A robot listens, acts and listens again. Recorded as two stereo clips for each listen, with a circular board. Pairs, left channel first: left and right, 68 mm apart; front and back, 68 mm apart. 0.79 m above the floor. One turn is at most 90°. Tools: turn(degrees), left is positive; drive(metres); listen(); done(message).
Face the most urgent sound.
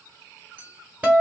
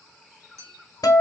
listen()
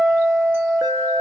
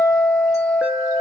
turn(degrees=-90)
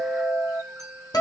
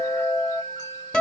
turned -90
turn(degrees=-10)
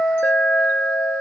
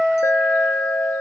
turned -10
done("Facing the alarm, under 1 m away.")